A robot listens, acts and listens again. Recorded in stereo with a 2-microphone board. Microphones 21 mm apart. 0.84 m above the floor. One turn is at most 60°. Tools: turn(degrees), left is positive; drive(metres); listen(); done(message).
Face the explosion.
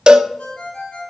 listen()
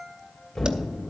turn(degrees=30)
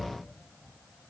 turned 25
turn(degrees=60)
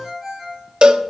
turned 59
turn(degrees=60)
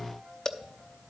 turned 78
turn(degrees=-15)
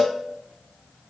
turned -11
done("I heard an explosion from this way, but can't make it out now.")